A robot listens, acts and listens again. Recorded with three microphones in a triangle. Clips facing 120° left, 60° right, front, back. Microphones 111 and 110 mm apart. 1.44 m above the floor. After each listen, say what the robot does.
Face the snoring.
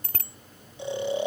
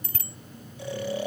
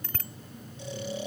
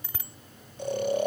Turn 175° right.
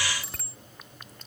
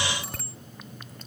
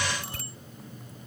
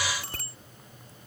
Keep listening.
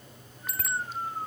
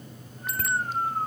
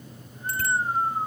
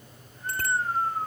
Turn 65° right.
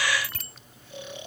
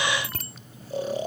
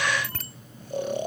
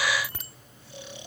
Turn 20° right.
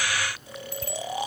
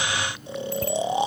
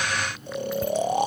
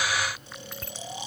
Facing the snoring.